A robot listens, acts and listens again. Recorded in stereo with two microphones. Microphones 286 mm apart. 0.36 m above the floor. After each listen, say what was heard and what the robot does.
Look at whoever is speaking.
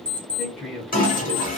Turn 30° right.
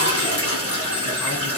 Keep listening.
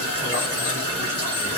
Keep listening.
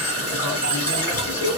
I heard a man speaking, but can't make it out now. It was about 25° left or 145° right.